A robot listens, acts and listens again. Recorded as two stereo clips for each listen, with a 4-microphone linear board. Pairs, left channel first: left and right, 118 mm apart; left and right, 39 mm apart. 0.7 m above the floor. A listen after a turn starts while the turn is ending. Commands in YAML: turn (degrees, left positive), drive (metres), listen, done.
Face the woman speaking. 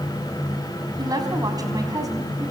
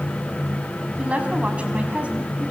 turn: -30
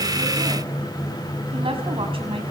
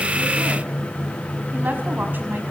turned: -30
turn: -130
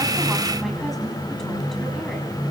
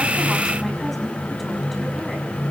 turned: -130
listen: true
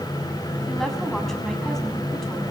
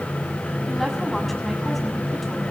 listen: true
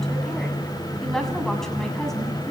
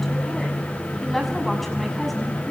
done: "Found it: a woman speaking, straight ahead, over 4 m away."